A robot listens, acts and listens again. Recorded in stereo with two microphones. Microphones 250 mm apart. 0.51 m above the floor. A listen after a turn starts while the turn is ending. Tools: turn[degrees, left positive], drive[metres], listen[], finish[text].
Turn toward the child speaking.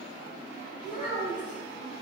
Thought: The child speaking: about 30° left or 150° left.
Action: turn[30]
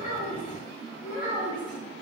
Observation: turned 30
Thought: So it is at 130° left.
Action: turn[130]
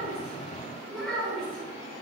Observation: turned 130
Action: finish[Found it: a child speaking, straight ahead.]